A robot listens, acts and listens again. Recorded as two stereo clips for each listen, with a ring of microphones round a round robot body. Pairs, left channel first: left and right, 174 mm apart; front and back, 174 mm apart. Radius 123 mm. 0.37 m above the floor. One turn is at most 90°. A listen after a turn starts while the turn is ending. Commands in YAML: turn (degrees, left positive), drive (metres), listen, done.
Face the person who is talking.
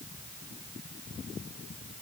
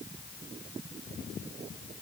listen: true
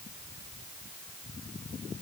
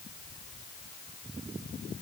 listen: true
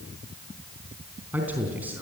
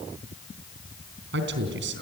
turn: -90
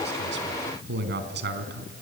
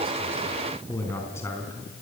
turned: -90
turn: -80
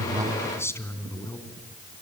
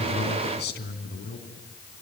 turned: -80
turn: 15
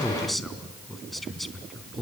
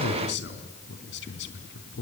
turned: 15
done: "Facing the man speaking, 2 to 4 m away."